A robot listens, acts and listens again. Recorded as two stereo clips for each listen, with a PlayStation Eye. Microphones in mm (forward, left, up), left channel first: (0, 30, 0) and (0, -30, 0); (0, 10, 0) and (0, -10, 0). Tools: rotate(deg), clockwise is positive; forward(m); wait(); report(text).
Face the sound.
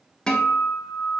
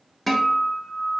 rotate(-30)
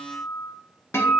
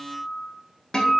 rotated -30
rotate(-135)
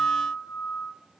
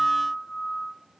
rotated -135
rotate(-50)
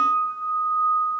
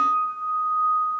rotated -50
rotate(-10)
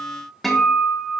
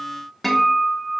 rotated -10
report("Found it: a guitar, straight ahead.")